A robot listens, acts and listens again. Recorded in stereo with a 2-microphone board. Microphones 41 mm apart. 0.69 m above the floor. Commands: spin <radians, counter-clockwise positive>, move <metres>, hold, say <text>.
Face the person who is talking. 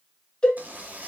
hold
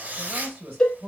spin -0.87
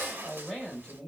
say Found it: a man speaking, straight ahead.